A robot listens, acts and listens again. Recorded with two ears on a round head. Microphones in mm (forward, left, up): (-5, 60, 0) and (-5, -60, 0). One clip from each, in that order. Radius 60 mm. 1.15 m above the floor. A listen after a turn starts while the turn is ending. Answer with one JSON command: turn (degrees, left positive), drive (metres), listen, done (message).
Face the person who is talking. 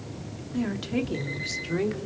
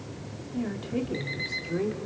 {"turn": 90}
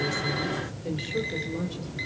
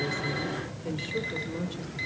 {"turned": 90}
{"done": "Found it: a woman speaking, straight ahead, 2 to 4 m away."}